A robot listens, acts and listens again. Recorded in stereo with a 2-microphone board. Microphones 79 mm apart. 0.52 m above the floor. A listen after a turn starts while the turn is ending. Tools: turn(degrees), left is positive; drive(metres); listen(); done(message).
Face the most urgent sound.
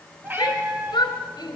turn(degrees=65)
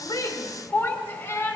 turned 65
turn(degrees=30)
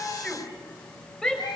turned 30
turn(degrees=10)
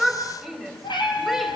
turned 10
done("Facing the shout.")